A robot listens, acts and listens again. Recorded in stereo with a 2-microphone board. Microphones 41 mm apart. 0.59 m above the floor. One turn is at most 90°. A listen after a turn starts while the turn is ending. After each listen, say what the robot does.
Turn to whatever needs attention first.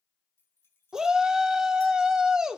Turn 15° right.
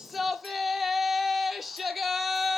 Found it: a shout, straight ahead.